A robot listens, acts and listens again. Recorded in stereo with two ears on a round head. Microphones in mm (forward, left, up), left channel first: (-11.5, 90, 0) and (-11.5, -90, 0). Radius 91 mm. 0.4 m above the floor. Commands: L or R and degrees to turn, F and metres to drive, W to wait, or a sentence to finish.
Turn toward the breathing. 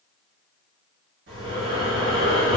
R65
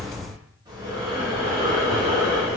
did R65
R25
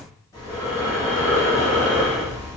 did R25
L20
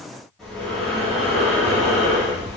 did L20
Found it: breathing, straight ahead, 1 to 2 m away.